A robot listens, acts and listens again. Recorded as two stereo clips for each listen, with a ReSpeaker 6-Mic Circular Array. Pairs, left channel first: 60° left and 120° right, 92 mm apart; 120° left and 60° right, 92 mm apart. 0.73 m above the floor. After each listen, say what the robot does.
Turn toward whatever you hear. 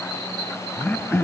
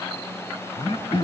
Turn 130° left.
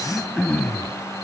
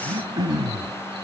Turn 20° right.
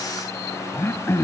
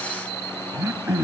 Found it: throat clearing, straight ahead.